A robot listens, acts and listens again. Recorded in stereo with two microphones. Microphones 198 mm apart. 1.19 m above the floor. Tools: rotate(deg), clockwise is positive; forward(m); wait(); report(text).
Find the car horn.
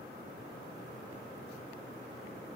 wait()
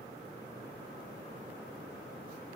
wait()
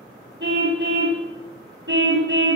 rotate(65)
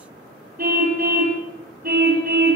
rotate(50)
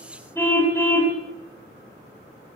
rotate(-10)
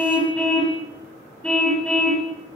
report("Facing the car horn.")